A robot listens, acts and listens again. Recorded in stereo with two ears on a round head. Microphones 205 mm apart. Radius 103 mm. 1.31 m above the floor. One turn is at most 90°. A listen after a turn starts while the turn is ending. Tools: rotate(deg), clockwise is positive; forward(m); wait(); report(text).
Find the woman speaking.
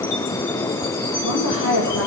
rotate(-90)
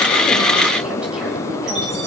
wait()
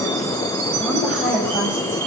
report("Found it: a woman speaking, straight ahead, over 4 m away.")